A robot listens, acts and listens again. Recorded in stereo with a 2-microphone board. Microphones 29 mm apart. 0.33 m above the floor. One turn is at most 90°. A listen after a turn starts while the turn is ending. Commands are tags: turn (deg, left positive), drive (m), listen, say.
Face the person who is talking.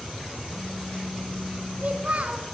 <turn deg="-55"/>
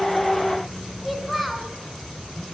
<say>Found it: a child speaking, straight ahead, 1 to 2 m away.</say>